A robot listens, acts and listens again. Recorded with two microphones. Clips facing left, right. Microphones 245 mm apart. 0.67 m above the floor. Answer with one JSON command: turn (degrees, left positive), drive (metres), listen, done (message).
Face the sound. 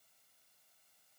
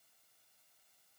{"listen": true}
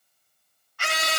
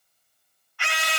{"turn": 45}
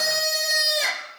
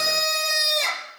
{"done": "Facing the scream."}